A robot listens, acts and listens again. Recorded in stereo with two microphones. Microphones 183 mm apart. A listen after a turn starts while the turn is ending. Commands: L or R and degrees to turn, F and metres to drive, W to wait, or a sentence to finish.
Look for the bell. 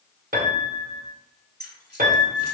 W
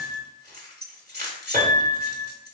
W
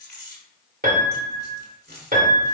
I can't make out a bell, only keys jangling and a piano.